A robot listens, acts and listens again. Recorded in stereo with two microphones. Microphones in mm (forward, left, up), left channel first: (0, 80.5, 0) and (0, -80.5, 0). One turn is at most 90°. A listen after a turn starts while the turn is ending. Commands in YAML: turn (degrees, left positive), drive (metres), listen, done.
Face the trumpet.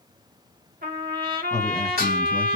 turn: -65
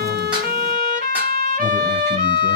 turn: -50
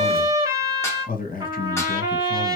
turn: -20
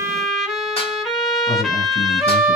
done: "Found it: a trumpet, straight ahead."